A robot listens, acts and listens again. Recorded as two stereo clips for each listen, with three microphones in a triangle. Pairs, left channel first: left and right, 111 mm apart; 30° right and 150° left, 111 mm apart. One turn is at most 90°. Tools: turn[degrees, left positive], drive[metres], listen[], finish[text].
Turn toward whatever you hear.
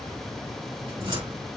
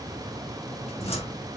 Thought: The cupboard door: 50° right.
Action: turn[-50]
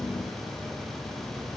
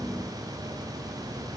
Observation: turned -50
Action: listen[]
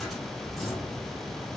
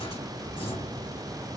Action: listen[]
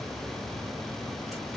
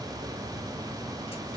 Action: finish[I heard a cupboard door from this way, but can't make it out now.]